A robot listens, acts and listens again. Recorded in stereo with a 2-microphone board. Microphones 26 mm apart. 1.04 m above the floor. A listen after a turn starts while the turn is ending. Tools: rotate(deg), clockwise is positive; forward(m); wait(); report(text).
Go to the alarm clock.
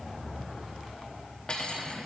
wait()
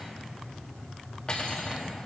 wait()
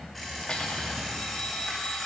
rotate(-30)
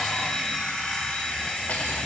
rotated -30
rotate(-150)
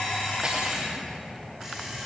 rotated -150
forward(1.0)
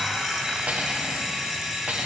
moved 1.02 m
rotate(10)
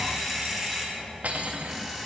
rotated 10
forward(1.0)
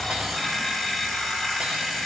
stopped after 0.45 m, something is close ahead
report("Arrived at the alarm clock, straight ahead.")